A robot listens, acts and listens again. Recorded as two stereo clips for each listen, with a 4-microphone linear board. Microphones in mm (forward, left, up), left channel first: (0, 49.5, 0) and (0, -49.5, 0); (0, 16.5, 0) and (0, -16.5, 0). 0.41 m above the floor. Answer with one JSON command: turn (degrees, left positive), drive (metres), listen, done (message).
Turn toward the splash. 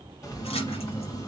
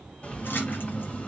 {"turn": 90}
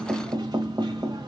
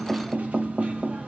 {"done": "Facing where the splash came from. I can't hear it now."}